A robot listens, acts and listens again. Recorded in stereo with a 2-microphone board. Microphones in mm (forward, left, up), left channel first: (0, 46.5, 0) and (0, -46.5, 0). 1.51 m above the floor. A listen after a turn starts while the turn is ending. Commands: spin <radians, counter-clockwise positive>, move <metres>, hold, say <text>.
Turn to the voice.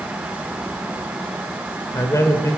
spin 0.61
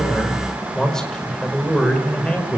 spin 0.17
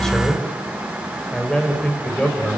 spin 0.17
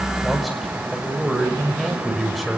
say Facing the man speaking.